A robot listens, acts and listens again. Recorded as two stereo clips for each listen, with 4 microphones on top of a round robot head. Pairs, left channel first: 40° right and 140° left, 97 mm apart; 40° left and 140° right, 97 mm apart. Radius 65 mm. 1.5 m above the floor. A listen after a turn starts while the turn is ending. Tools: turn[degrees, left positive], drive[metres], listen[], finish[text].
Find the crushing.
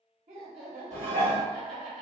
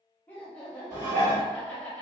Action: listen[]
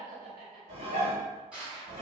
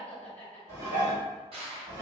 Thought: The crushing: 140° right.
Action: turn[-140]
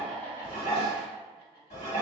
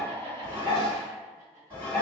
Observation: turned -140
Action: listen[]
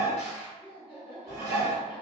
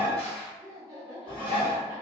Action: listen[]
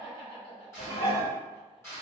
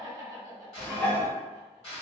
Thought: The crushing is now 25° left.
Action: turn[25]
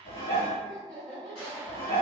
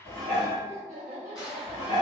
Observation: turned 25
Action: listen[]
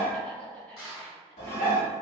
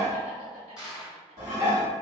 Thought: The crushing is now 10° right.
Action: turn[-10]
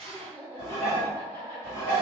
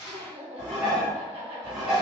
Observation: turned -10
Action: listen[]
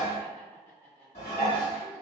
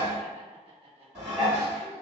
Action: listen[]
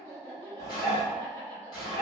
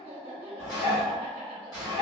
Action: finish[Facing where the crushing came from. I can't hear it now.]